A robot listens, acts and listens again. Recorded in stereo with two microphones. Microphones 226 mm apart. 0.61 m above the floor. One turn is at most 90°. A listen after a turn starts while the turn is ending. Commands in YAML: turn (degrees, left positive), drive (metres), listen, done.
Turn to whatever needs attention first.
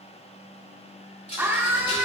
turn: -30
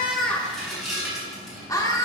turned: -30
turn: 20
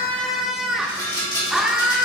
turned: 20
done: "Found it: a scream, straight ahead."